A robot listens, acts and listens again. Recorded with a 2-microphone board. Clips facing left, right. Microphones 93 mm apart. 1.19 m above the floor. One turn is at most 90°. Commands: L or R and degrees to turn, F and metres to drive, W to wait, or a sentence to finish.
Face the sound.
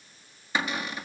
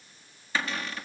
L15
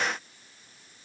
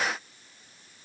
W
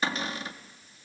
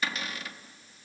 L90
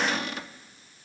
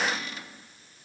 L60
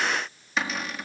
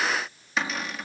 Found it: a cupboard door, straight ahead, 1 to 2 m away.